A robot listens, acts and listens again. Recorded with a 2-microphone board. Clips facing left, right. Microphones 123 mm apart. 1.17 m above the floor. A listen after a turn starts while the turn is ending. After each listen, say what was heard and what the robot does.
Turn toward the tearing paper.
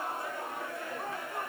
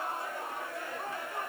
Keep listening.
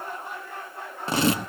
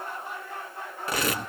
The tearing paper: about 25° left or 155° left. Turn 25° left.
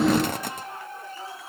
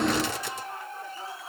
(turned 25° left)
So it is at 130° left. Turn 130° left.
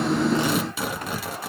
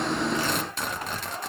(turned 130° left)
Found it: tearing paper, straight ahead.